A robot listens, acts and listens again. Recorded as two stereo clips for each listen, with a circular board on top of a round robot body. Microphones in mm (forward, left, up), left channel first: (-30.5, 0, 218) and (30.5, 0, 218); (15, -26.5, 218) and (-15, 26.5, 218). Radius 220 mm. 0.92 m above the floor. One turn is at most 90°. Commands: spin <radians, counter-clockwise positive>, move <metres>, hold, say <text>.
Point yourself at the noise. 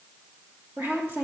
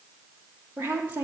spin 0.96
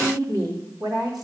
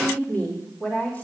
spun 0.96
say Found it: a woman speaking, straight ahead.